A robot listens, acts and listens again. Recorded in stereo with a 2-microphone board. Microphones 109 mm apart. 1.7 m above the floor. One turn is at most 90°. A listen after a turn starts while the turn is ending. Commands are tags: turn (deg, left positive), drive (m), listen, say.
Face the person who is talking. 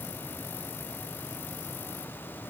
<listen/>
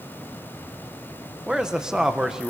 <turn deg="-30"/>
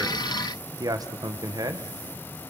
<turn deg="-90"/>
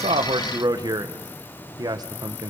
<turn deg="-40"/>
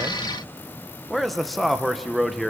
<say>Found it: a man speaking, straight ahead, 1 to 2 m away.</say>